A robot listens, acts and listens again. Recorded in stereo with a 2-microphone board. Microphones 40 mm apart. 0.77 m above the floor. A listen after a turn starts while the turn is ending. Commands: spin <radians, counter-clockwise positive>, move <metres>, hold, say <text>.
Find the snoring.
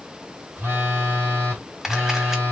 hold
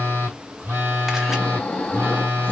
spin 0.44
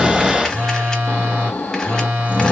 spin 2.18
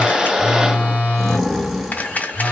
say Found it: snoring, straight ahead, 1 to 2 m away.